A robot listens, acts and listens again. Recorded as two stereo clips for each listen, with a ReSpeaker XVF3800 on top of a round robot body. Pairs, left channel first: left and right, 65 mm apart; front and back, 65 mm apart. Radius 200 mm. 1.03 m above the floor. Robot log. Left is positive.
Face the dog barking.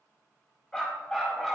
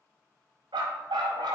note: The dog barking: 175° left.
cmd yaw +175
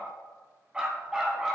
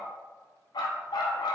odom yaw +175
note: The dog barking is now 10° right.
cmd yaw -10
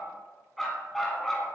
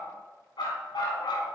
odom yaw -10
end: Found it: a dog barking, straight ahead, 2 to 4 m away.